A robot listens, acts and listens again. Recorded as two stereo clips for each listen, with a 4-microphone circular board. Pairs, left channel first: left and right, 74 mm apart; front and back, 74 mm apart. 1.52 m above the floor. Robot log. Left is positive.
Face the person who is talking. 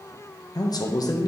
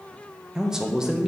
note: The man speaking: 100° left.
cmd yaw +100
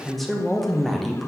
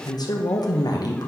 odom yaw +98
end: Found it: a man speaking, straight ahead, under 1 m away.